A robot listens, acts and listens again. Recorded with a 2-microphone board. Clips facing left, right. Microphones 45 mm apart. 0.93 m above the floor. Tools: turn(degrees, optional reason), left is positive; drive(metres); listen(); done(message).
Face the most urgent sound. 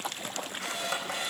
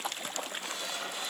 listen()
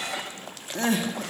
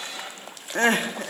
turn(degrees=-50, reason="The crying: about 50° right or 130° right.")
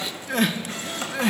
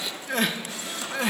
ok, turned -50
done("Facing the crying.")